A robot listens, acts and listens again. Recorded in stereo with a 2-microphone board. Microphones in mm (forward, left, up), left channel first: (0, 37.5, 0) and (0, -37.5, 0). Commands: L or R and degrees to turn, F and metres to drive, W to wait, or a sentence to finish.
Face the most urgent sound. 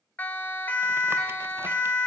L25
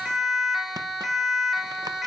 Found it: a siren, straight ahead, 2 to 4 m away.